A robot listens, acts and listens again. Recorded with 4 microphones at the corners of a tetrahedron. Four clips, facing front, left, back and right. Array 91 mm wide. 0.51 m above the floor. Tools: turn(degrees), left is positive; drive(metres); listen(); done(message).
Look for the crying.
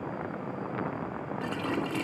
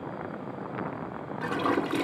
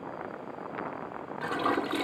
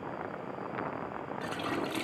listen()
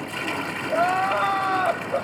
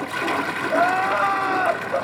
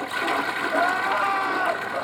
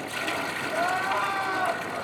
turn(degrees=60)
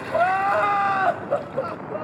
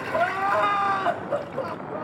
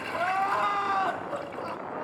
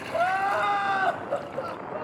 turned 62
done("Facing the crying.")